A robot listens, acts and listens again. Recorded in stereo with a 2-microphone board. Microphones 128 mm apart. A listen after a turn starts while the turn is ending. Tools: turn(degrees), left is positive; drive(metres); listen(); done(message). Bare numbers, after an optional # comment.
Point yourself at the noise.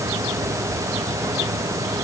listen()
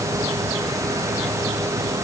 listen()
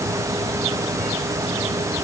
done("I can't make out anything to turn to.")